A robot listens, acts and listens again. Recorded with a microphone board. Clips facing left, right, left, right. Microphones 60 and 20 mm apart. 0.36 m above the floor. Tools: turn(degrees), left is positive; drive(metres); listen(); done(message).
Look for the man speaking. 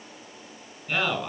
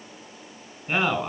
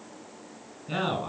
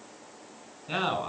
turn(degrees=-20)
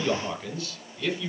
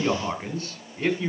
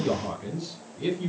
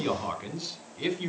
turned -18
turn(degrees=-35)
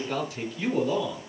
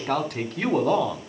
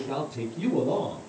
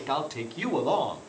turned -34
turn(degrees=-120)
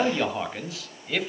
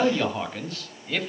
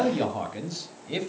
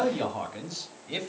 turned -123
done("Found it: a man speaking, straight ahead, 1 to 2 m away.")